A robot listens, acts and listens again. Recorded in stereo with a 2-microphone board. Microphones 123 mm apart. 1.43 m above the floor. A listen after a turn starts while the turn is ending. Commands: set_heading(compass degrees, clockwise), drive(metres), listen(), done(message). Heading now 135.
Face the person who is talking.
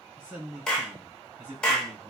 set_heading(165)
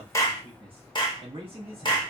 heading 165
set_heading(305)
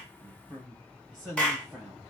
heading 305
done("Facing the man speaking, 1 to 2 m away.")